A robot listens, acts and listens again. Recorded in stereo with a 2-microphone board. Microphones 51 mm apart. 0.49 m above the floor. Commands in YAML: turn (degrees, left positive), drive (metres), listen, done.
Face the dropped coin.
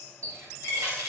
turn: 60
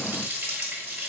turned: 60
listen: true
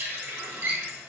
done: "I heard a dropped coin, but can't make it out now. It was about straight ahead or 60° left."